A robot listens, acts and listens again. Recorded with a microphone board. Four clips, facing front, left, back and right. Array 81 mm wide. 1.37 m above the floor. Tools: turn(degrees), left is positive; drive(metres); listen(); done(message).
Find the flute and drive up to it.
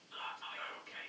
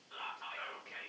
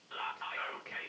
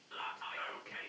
listen()
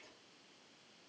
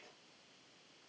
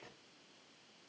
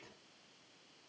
listen()
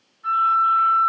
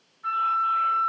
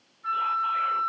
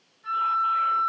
turn(degrees=75)
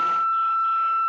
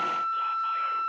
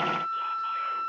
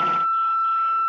drive(metres=1.0)
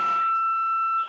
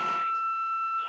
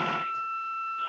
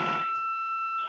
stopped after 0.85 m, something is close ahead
done("Arrived at the flute, straight ahead.")